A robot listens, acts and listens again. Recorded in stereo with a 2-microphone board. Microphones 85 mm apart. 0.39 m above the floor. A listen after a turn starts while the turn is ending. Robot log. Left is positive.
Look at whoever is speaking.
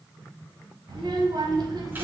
note: The child speaking: about 60° right or 120° right.
cmd yaw -60
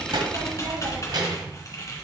note: So it is at 60° right.
cmd yaw -60
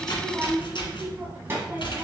note: The child speaking is now 30° right.
cmd yaw -30
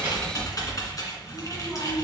end: Found it: a child speaking, straight ahead.